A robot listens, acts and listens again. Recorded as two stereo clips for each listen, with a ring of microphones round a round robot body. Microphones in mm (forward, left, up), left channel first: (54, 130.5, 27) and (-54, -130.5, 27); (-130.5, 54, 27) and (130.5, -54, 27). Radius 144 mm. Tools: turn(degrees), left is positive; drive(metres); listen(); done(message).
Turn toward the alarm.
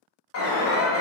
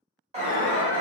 turn(degrees=40)
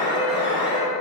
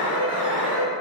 done("Found it: an alarm, straight ahead, under 1 m away.")